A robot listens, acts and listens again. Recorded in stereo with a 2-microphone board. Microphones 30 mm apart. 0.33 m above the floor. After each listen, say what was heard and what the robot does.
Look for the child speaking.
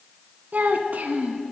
The child speaking: about 75° right or 105° right. Turn 75° right.
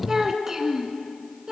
So it is at 25° right. Turn 25° right.
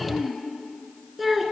Found it: a child speaking, straight ahead, 2 to 4 m away.